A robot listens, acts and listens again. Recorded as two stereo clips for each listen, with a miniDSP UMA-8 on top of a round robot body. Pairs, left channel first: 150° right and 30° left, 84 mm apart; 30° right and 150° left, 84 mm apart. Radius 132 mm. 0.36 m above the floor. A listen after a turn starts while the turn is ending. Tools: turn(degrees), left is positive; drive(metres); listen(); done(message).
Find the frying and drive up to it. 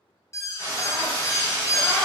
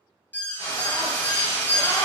turn(degrees=-10)
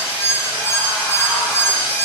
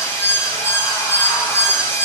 listen()
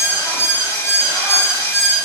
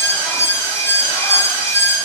listen()
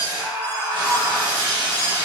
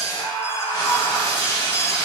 drive(metres=1.0)
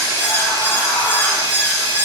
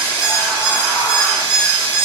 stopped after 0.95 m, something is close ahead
done("I am next to the frying.")